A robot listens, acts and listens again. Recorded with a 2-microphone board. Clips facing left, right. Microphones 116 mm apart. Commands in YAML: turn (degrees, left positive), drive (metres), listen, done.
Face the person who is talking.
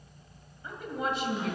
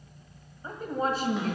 turn: -40
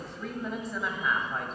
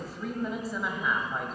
done: "Found it: a woman speaking, straight ahead."